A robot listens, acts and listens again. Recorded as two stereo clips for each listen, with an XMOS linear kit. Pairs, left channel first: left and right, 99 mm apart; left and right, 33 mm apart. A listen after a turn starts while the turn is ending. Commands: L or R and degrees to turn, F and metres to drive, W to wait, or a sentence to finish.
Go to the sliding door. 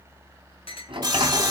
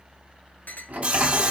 R60
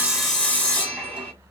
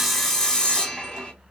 W
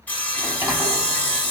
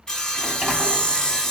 R20
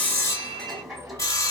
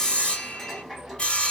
W
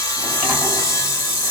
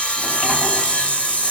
W
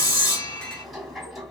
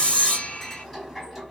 F1.0
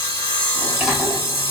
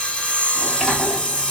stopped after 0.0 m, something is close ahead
R10
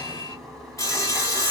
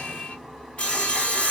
Something is in my way. I am facing the sliding door but have not reached it.